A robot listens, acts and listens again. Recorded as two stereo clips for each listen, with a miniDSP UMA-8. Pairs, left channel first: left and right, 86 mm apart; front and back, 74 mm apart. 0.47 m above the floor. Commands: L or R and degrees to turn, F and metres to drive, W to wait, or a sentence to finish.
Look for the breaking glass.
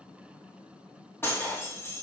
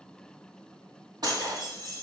L155
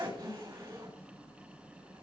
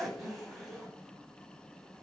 I heard breaking glass from this way, but can't make it out now.